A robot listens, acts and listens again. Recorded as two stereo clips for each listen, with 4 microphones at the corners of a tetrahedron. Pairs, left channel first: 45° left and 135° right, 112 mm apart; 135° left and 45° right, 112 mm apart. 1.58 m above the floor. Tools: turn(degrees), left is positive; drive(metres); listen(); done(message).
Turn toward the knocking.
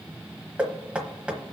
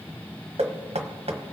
turn(degrees=-55)
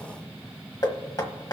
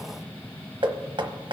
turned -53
done("Found it: knocking, straight ahead, 1 to 2 m away.")